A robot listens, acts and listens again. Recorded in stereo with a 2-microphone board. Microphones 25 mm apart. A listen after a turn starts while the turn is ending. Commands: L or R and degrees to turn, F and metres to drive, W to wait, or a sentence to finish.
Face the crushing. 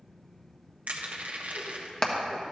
R65
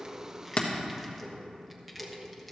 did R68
W
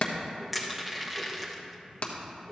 Facing the crushing.